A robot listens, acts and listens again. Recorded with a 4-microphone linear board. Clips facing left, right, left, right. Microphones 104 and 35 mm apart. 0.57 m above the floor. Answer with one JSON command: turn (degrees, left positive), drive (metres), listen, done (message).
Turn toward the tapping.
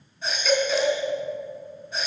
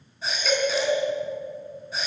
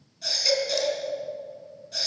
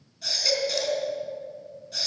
{"listen": true}
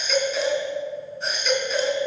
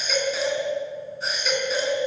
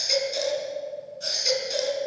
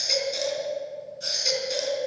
{"listen": true}
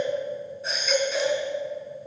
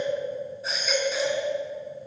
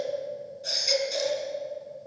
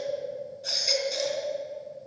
{"done": "I can't make out tapping, only a baby crying."}